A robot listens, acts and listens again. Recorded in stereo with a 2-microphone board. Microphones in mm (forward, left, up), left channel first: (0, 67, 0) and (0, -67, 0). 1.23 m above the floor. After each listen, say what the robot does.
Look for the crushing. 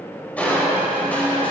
Turn 30° left.
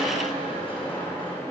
Turn 140° left.
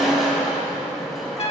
Found it: crushing, straight ahead.